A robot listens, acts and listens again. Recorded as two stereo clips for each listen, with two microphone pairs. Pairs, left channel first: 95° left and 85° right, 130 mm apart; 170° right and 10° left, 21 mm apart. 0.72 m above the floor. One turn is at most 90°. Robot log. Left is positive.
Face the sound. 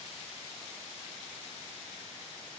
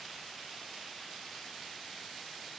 cmd idle
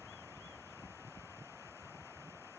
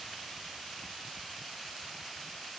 cmd idle
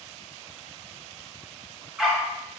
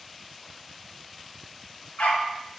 note: The dog barking: 170° right.
cmd yaw -90
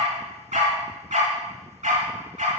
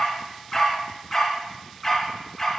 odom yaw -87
note: The dog barking is now 90° right.
cmd yaw -90
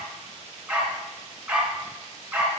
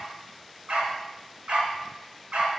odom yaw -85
end: Facing the dog barking.